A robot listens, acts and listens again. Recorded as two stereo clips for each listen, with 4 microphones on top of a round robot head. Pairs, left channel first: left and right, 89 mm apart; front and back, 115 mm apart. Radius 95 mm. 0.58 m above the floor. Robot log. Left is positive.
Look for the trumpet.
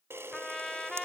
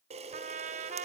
note: The trumpet: 175° left.
cmd yaw +175
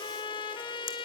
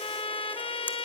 note: The trumpet is now 40° left.
cmd yaw +40
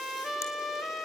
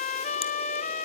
end: Facing the trumpet, 1 to 2 m away.